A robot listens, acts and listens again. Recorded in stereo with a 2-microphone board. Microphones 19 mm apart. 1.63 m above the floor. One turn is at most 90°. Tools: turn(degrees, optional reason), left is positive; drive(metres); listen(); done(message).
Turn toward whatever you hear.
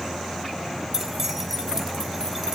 turn(degrees=-25, reason="The keys jangling: about 25° right or 155° right.")
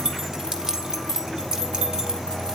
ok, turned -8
turn(degrees=-40, reason="The keys jangling: about 40° right or 140° right.")
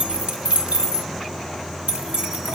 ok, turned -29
turn(degrees=-90, reason="So it is at 105° right.")
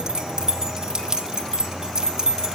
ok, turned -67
turn(degrees=-35, reason="The keys jangling is now 35° right.")
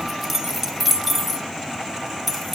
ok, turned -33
done("Found it: keys jangling, straight ahead.")